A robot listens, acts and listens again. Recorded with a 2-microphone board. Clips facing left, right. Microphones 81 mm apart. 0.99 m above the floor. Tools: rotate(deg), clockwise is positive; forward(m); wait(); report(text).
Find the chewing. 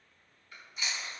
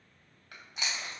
rotate(90)
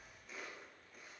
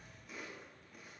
wait()
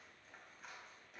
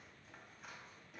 wait()
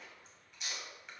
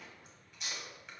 report("Facing the chewing.")